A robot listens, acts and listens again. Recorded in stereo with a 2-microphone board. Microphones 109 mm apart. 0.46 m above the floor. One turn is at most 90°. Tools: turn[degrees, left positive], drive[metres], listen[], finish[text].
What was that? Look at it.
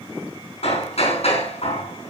Thought: The hammering: about 70° left or 110° left.
Action: turn[70]
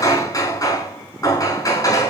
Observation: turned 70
Thought: So it is at 35° left.
Action: turn[35]
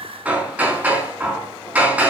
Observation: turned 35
Thought: The hammering is now 15° right.
Action: turn[-15]
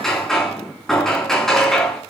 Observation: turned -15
Action: finish[Facing the hammering, over 4 m away.]